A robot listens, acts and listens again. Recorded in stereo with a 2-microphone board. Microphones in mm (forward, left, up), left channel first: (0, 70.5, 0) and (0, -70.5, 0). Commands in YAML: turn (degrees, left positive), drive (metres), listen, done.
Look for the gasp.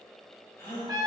turn: 20
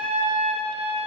listen: true
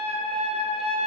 done: "I heard a gasp, but can't make it out now. It was about straight ahead or 140° left."